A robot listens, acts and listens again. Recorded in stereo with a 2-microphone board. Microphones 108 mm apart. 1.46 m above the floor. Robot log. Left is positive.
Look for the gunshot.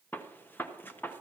note: The gunshot: about 15° left or 165° left.
cmd yaw +15
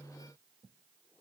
cmd idle
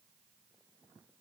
end: I heard a gunshot, but can't make it out now. It was about straight ahead or 150° left.